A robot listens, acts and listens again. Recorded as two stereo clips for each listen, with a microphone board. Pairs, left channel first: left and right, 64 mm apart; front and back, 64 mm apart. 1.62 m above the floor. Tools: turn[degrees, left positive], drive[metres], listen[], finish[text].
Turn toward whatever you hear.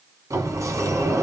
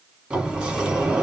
Thought: The sliding door: 100° right.
Action: turn[-100]
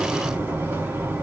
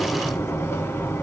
Thought: The sliding door is now 40° right.
Action: turn[-40]
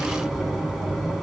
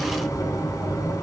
Action: finish[Found it: a sliding door, straight ahead.]